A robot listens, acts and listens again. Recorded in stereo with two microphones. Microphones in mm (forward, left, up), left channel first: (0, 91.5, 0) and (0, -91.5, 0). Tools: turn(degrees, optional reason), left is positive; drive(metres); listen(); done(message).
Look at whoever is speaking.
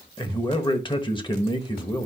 turn(degrees=25, reason="The man speaking: about 25° left or 155° left.")
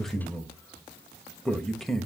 done("Facing the man speaking.")